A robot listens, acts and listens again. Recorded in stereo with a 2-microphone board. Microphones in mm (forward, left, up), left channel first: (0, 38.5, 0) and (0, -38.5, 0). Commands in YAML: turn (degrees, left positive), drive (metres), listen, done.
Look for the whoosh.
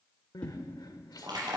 turn: 15
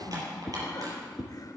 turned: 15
done: "Facing the whoosh."